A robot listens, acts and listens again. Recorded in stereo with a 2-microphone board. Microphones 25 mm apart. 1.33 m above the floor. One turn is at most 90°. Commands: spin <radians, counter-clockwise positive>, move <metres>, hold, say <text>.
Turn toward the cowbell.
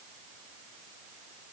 hold
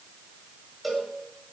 spin -0.52
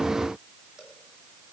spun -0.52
hold
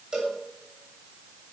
spin -1.57
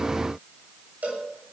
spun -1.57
spin -1.48
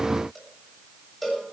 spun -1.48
say Facing the cowbell.